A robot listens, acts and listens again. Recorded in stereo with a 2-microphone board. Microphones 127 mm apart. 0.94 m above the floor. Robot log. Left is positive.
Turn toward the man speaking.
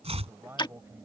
note: The man speaking: about 20° right or 160° right.
cmd yaw -20
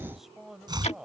cmd yaw -30
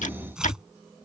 cmd idle
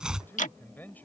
note: So it is at 10° left.
cmd yaw +10
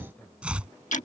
cmd idle
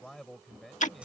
end: Found it: a man speaking, straight ahead.